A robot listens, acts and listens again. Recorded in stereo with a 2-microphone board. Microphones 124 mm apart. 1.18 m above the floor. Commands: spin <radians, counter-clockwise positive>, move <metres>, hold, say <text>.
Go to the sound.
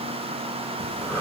spin 0.26
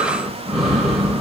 move 1.0
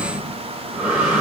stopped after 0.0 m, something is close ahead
spin -0.17
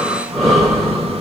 say Something is in my way. I am facing the breathing but have not reached it.